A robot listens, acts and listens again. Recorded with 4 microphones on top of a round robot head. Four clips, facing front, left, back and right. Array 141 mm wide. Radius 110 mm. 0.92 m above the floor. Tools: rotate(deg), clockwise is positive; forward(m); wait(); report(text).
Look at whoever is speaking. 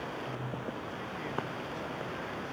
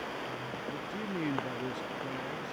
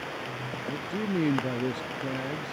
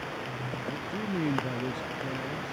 rotate(170)
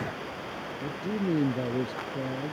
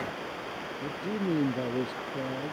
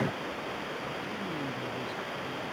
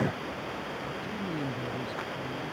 rotate(-45)
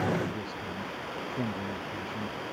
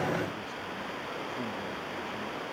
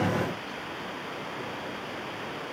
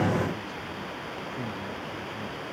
wait()
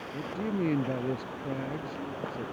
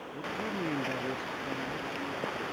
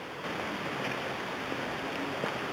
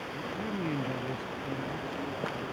rotate(-10)
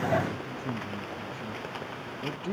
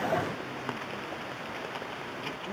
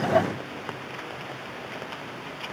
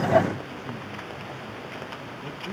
wait()
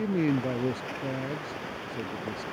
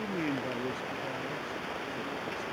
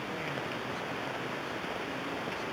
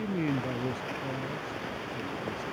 report("Facing the man speaking.")